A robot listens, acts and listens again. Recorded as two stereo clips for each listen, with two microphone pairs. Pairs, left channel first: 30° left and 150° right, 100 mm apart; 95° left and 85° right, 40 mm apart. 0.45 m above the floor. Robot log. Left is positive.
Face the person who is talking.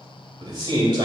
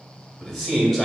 note: The man speaking: 175° left.
cmd yaw +175
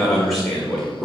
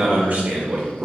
note: The man speaking is now 55° right.
cmd yaw -55
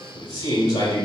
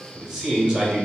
note: The man speaking is now 10° right.
cmd yaw -10
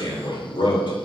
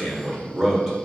end: Found it: a man speaking, straight ahead.